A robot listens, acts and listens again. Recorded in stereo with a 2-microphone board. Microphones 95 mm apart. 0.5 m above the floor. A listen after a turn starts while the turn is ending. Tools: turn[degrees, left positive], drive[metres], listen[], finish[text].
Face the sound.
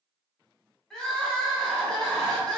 Action: turn[30]
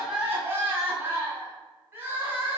Thought: So it is at 25° right.
Action: turn[-25]
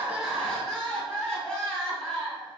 Thought: The crying is now 10° left.
Action: turn[10]
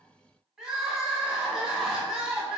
Action: finish[Facing the crying, 2 to 4 m away.]